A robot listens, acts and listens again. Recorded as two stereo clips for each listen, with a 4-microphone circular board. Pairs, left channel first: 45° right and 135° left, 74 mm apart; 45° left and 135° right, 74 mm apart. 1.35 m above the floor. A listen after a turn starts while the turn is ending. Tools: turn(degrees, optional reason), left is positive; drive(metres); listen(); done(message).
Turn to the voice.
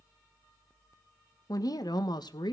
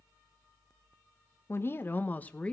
turn(degrees=-30, reason="The woman speaking: 30° right.")
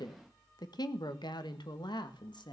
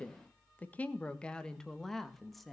turn(degrees=-45, reason="The woman speaking is now 45° right.")
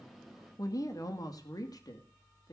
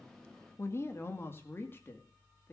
turn(degrees=-15, reason="The woman speaking is now 15° right.")
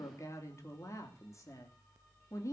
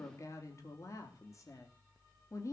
done("Facing the woman speaking.")